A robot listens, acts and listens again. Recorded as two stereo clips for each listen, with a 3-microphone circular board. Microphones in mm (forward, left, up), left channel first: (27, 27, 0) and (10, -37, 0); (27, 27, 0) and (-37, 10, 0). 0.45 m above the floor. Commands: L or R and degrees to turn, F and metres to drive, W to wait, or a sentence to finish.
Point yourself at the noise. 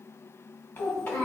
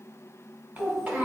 L120
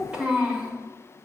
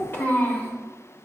R40
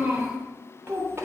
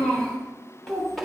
R75
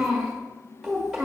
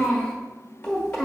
R25
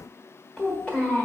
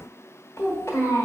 Found it: a child speaking, straight ahead, 1 to 2 m away.